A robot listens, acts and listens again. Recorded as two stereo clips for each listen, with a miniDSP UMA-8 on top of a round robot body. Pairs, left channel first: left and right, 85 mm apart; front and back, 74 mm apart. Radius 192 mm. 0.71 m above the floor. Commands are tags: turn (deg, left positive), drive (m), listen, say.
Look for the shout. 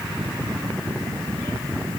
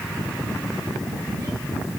<listen/>
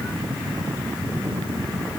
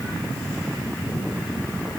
<listen/>
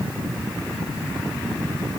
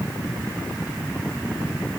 <say>I can't make out a shout.</say>